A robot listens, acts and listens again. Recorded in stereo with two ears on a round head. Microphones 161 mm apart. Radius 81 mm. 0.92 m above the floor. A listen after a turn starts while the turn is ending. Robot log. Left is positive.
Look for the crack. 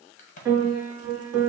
note: The crack: about 45° left or 135° left.
cmd yaw +45
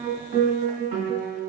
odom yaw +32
cmd idle
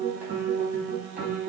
end: I heard a crack, but can't make it out now. It was about 10° left or 105° left.